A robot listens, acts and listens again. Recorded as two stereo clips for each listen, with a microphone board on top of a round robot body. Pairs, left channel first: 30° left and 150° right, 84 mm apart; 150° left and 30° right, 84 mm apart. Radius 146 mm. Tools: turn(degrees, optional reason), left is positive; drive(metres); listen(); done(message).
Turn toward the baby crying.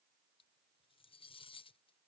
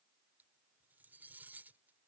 listen()
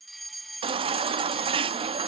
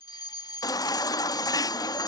turn(degrees=-160, reason="The baby crying: 160° right.")
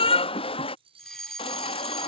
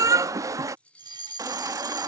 turn(degrees=25, reason="The baby crying is now 25° left.")
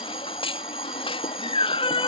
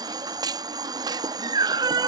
turn(degrees=10, reason="The baby crying is now 10° left.")
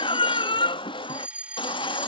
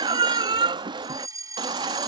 done("Facing the baby crying.")